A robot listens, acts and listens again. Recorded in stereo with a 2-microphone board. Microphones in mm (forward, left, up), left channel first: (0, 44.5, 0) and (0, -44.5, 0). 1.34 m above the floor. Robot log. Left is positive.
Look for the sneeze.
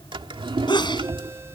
note: The sneeze: about 60° left or 120° left.
cmd yaw +60
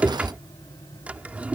cmd idle
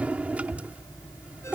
end: I heard a sneeze, but can't make it out now. It was about straight ahead or 60° left.